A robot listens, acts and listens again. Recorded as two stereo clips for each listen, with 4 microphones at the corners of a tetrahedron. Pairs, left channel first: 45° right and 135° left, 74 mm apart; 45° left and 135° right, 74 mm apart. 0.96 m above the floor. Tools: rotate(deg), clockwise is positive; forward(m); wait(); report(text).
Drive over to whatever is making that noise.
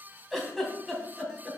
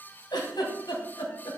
rotate(-45)
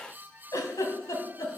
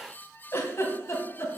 forward(1.0)
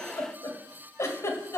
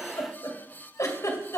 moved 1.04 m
forward(1.0)
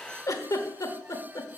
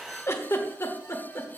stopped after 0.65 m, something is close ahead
report("Arrived at the giggle, straight ahead.")